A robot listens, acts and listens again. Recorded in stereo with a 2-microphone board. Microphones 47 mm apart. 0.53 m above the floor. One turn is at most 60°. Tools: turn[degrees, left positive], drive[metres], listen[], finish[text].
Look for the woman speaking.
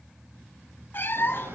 Action: listen[]
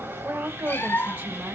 Thought: The woman speaking: about 45° right or 135° right.
Action: turn[-45]
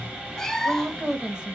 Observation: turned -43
Thought: So it is at 20° right.
Action: turn[-20]
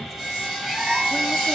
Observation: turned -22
Action: listen[]
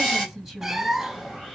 Action: finish[Facing the woman speaking.]